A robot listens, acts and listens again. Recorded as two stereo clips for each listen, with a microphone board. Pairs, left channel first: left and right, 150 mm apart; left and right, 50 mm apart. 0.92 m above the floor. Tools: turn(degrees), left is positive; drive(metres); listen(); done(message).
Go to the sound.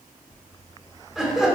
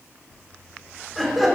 turn(degrees=-30)
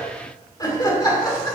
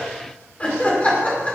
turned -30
turn(degrees=25)
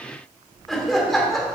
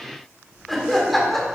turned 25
drive(metres=1.0)
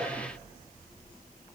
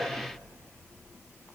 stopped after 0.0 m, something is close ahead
listen()
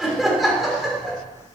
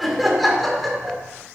done("Something is in my way. I am facing the laughter but have not reached it.")